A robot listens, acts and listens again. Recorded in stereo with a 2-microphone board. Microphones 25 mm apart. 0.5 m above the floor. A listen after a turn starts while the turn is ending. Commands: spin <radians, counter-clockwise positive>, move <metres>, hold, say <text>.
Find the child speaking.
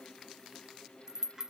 hold
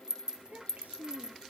spin -1.57
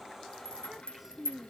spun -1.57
spin -0.17
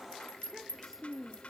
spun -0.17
say Found it: a child speaking, straight ahead.